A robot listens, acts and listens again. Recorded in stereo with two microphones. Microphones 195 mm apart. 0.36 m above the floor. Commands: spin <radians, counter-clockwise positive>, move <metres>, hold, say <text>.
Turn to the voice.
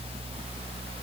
hold
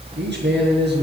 spin -1.13
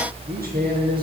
spin -0.87
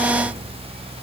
hold
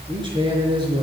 spin -0.44
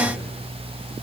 hold
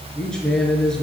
say Found it: a man speaking, straight ahead.